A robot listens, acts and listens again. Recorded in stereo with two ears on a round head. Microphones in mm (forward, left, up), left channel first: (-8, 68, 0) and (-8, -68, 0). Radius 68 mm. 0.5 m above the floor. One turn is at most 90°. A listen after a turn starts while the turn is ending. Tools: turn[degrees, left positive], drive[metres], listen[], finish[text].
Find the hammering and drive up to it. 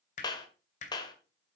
Thought: The hammering: about 50° left or 130° left.
Action: turn[50]
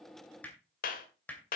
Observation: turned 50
Thought: So it is at 10° left.
Action: turn[10]
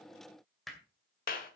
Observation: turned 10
Action: drive[1.0]
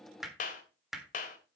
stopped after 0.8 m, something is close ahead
Action: finish[Arrived at the hammering, straight ahead.]